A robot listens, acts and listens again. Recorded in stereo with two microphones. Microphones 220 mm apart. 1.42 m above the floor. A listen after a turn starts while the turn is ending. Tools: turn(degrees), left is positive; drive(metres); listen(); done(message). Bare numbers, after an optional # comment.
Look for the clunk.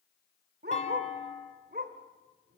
# The clunk: about 35° left or 145° left.
turn(35)
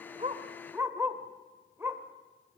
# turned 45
listen()
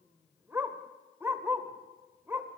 done("I heard a clunk, but can't make it out now. It was about 10° right or 100° left.")